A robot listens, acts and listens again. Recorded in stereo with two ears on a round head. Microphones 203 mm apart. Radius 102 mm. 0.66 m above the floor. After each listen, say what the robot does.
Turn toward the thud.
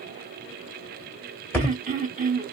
Turn 30° left.
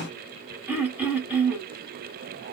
Keep listening.
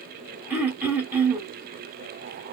I heard a thud, but can't make it out now. It was about 20° right or 140° left.